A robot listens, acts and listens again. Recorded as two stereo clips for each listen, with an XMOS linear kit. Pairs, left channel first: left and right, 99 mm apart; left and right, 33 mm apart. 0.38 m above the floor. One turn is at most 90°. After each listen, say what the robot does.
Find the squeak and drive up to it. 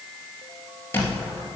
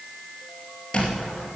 Turn 25° left.
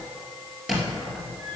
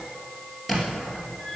Drive 1.0 m forward.
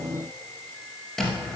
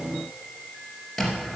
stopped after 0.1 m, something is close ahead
Something is in my way. I am facing the squeak but have not reached it.